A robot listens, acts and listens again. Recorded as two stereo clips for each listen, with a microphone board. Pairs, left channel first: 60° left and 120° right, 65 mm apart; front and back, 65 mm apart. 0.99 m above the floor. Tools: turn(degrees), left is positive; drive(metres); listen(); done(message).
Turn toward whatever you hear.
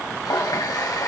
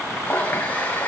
turn(degrees=65)
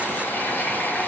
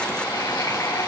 done("Facing the running tap, 2 to 4 m away.")